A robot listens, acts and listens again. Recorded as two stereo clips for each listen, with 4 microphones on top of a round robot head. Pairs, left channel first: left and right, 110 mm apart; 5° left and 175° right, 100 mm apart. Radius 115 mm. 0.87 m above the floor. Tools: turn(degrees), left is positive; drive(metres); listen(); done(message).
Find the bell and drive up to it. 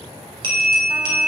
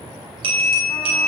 turn(degrees=-135)
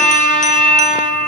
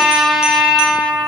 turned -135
drive(metres=1.0)
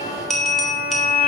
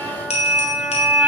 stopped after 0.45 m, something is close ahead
done("Blocked. The bell is further on, straight ahead.")